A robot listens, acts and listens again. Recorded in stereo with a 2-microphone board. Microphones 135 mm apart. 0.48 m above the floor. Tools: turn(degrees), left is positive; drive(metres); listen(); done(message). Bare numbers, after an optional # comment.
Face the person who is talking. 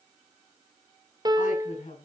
# The woman speaking: about 75° left or 105° left.
turn(75)
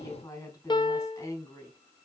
# So it is at 25° left.
turn(25)
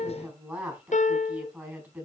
# The woman speaking is now 15° right.
turn(-15)
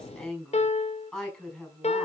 done("Found it: a woman speaking, straight ahead.")